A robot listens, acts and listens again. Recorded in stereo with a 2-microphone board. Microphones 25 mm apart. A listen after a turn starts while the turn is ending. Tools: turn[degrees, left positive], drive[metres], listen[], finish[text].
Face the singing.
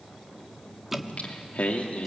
Thought: The singing: about 65° left or 115° left.
Action: turn[65]
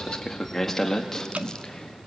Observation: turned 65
Thought: So it is at 15° left.
Action: turn[15]
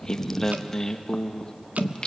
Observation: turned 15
Thought: The singing is now 35° left.
Action: turn[35]
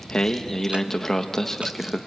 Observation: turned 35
Thought: The singing is now 15° left.
Action: turn[15]
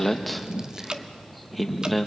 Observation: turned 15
Action: finish[Facing the singing, 1 to 2 m away.]